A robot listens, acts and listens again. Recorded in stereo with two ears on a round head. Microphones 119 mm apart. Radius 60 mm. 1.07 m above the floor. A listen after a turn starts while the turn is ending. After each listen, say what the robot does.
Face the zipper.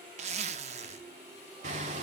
Turn 50° right.
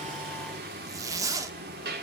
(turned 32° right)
Turn 30° right.
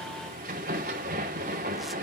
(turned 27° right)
Keep listening.
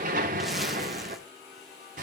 Keep listening.
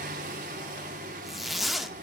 Found it: a zipper, straight ahead, under 1 m away.